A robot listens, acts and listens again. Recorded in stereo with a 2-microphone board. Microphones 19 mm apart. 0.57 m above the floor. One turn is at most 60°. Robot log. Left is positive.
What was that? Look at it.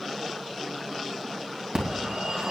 note: The phone ringing: about 60° right or 120° right.
cmd yaw -60
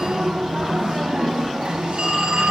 note: So it is at 55° right.
cmd yaw -55
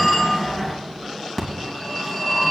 note: The phone ringing is now 25° left.
cmd yaw +25
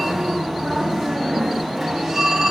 end: Found it: a phone ringing, straight ahead, 2 to 4 m away.